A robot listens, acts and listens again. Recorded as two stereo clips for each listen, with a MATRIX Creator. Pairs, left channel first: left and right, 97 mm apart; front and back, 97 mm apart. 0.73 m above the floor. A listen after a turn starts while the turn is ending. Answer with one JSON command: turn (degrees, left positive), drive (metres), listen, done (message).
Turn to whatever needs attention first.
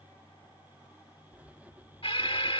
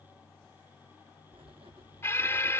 {"turn": 65}
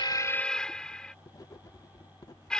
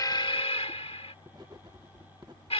{"turn": 10}
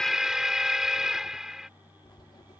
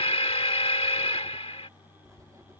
{"done": "Found it: an alarm, straight ahead."}